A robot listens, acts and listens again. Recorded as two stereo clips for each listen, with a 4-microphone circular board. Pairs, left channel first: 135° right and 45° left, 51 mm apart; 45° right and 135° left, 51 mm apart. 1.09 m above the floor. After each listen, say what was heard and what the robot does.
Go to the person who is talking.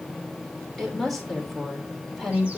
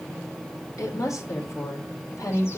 The woman speaking: 50° right. Turn 50° right.
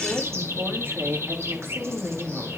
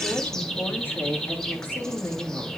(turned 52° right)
Drive 1.0 m forward.
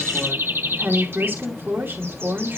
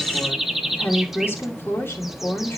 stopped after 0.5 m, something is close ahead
Something is in my way. I am facing the woman speaking but have not reached it.